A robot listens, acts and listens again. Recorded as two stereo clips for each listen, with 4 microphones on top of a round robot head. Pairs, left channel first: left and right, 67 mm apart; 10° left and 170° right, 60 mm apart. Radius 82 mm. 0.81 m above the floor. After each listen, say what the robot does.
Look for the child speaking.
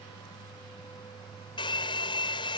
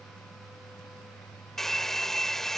Keep listening.
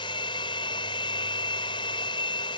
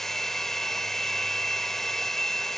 Keep listening.
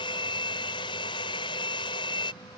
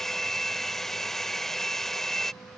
I can't make out a child speaking, only a hair dryer.